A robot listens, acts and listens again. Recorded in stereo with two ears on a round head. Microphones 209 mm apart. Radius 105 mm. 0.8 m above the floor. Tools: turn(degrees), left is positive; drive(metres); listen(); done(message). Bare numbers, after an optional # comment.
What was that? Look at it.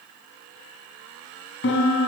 # The piano: about 55° left or 125° left.
turn(55)
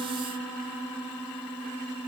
done("Facing the piano.")